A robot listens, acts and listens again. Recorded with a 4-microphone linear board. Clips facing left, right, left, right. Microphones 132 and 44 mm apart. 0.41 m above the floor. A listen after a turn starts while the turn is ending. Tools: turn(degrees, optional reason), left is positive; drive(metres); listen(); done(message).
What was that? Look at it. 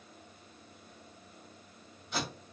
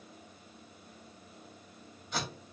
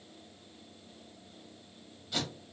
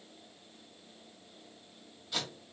turn(degrees=30)
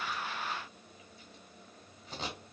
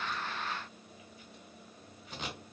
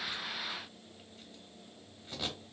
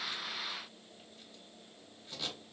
turn(degrees=150, reason="So it is at 150° left.")
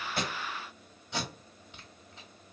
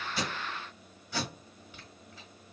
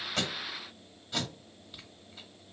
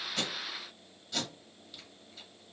turn(degrees=25, reason="The tape being pulled is now 25° left.")
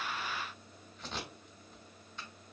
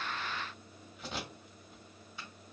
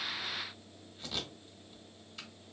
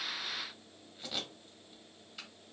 done("Facing the tape being pulled, 1 to 2 m away.")